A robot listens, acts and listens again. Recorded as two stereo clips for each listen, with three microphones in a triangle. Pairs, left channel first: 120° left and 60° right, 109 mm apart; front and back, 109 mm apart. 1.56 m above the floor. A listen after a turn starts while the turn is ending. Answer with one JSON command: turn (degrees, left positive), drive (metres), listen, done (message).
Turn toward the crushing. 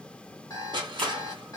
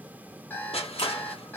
{"turn": -15}
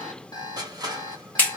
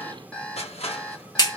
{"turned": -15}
{"turn": -10}
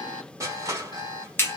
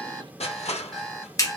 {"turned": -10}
{"done": "Found it: crushing, straight ahead."}